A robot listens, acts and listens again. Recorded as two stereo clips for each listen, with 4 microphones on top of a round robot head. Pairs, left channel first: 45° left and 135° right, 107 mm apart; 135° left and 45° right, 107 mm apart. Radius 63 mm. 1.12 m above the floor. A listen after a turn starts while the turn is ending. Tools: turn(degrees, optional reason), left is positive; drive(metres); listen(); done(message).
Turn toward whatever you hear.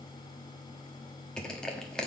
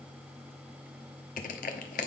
turn(degrees=130, reason="The crushing: 130° left.")
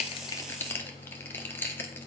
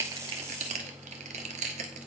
turn(degrees=-25, reason="The crushing is now 25° right.")
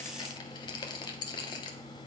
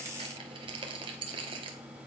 done("Found it: crushing, straight ahead.")